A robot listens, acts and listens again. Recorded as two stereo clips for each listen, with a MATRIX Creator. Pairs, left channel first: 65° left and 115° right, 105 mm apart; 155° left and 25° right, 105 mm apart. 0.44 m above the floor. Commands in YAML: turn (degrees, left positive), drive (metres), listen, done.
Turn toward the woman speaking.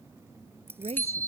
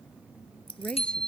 turn: -125
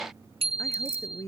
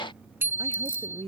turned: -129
done: "Found it: a woman speaking, straight ahead."